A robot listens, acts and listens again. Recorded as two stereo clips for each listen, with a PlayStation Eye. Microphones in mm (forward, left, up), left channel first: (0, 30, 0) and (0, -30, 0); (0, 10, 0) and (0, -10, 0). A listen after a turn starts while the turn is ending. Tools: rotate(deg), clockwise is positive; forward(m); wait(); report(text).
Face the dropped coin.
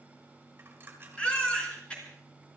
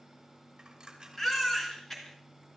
rotate(35)
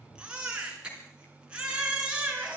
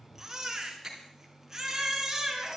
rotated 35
wait()
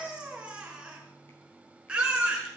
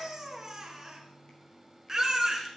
report("I heard a dropped coin, but can't make it out now. It was about straight ahead or 110° right.")